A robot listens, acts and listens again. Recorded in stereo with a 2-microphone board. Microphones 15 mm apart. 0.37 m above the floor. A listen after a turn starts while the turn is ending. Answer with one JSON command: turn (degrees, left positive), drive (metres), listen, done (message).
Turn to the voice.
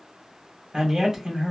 {"turn": -45}
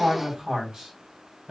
{"turn": -85}
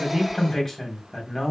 {"done": "Facing the man speaking."}